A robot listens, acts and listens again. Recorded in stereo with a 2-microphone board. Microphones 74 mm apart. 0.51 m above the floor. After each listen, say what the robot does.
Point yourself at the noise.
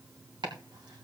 Turn 90° right.
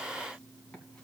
Keep listening.
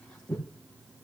Turn 10° left.
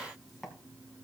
Facing the chopping.